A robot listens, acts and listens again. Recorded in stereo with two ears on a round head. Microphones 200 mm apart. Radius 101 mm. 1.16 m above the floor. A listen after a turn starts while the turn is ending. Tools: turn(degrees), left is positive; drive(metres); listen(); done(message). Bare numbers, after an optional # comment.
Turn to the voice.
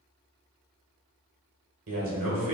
# The man speaking: about 65° right or 115° right.
turn(-65)
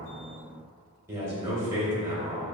# So it is at 15° right.
turn(-15)
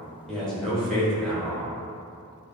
done("Facing the man speaking, 1 to 2 m away.")